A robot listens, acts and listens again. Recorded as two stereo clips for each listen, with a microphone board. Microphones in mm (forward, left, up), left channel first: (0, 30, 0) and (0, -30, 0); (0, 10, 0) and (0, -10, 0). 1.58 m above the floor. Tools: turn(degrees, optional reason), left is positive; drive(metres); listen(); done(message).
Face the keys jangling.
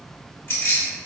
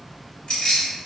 turn(degrees=45, reason="The keys jangling: about 45° left or 135° left.")
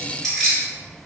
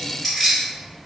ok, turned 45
done("Found it: keys jangling, straight ahead, 1 to 2 m away.")